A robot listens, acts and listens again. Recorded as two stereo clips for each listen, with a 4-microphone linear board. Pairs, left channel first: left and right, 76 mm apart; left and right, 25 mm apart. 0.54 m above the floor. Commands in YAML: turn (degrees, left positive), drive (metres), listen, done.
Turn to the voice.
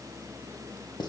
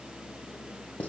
listen: true
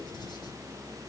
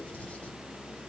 listen: true
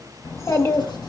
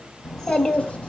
turn: 35
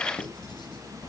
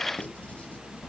turn: 110
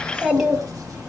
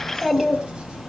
turn: -10
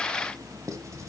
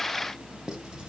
listen: true
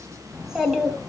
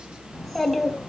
done: "Facing the child speaking."